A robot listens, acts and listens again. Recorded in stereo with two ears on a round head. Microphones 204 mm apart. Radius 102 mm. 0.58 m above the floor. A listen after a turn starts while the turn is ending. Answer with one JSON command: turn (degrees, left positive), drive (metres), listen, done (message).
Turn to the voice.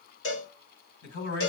{"turn": 60}
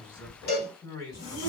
{"turn": 20}
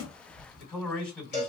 {"done": "Found it: a man speaking, straight ahead."}